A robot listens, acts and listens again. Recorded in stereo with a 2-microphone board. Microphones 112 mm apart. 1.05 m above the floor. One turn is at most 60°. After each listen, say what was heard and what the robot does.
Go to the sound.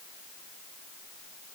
Keep listening.
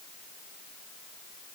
Keep listening.
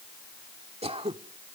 The throat clearing: about 60° right or 120° right. Turn 60° right.
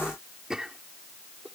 Drive 1.0 m forward.
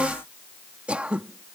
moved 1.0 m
The throat clearing is now 10° right. Turn 10° right.
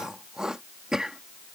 Drive 1.0 m forward.
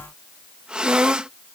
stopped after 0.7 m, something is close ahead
I am next to the throat clearing.